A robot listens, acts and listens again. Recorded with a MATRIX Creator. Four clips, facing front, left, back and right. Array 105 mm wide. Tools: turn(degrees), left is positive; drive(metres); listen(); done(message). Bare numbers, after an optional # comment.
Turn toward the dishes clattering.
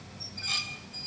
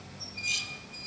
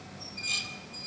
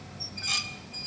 # The dishes clattering: 65° right.
turn(-65)
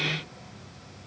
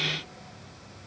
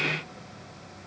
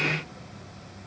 listen()
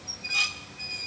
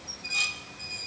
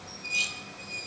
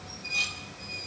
# The dishes clattering is now 15° left.
turn(15)
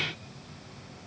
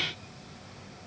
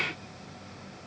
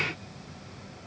listen()
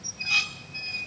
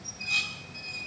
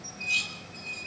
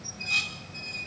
done("Found it: dishes clattering, straight ahead.")